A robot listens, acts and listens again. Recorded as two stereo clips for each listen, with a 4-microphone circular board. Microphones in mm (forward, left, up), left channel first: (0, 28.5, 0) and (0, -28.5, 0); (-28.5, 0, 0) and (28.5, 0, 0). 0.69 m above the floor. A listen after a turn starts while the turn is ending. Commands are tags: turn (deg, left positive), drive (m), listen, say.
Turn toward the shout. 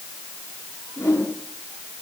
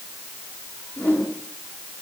<listen/>
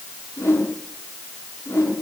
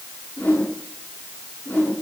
<listen/>
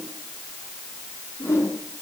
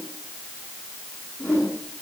<say>I can't make out a shout, only a whoosh.</say>